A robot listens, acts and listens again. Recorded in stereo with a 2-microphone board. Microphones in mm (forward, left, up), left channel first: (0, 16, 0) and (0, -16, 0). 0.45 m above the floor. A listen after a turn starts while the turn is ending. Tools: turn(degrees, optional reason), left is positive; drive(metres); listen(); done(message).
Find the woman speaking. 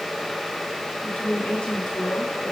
turn(degrees=20, reason="The woman speaking: about 20° left or 160° left.")
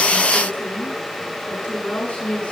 turn(degrees=140, reason="So it is at 140° left.")
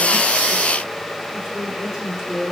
done("Found it: a woman speaking, straight ahead, over 4 m away.")